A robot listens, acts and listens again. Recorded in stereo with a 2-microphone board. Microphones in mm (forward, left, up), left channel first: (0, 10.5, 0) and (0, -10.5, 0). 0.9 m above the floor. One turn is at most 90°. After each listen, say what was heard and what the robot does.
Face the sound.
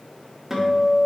Turn 30° right.
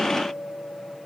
So it is at 20° left. Turn 20° left.
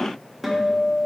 Facing the guitar.